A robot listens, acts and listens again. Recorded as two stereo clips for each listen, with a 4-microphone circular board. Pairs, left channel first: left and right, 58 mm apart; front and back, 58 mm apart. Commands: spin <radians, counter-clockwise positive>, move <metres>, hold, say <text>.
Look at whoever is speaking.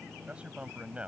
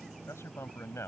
spin -0.44
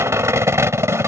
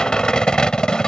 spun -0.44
hold
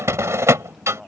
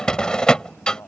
say Found it: a man speaking, straight ahead.